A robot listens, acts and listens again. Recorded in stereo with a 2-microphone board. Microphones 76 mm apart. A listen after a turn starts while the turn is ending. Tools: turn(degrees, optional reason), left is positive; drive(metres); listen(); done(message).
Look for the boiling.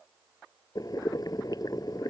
turn(degrees=55, reason="The boiling: about 55° left or 125° left.")
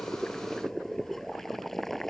done("Found it: boiling, straight ahead.")